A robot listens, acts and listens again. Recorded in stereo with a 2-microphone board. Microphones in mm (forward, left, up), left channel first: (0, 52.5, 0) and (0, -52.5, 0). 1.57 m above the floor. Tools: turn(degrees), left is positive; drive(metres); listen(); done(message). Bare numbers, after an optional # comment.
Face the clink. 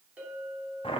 turn(-30)
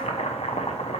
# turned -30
listen()
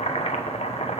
listen()
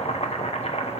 done("I heard a clink, but can't make it out now. It was about 15° left or 135° right.")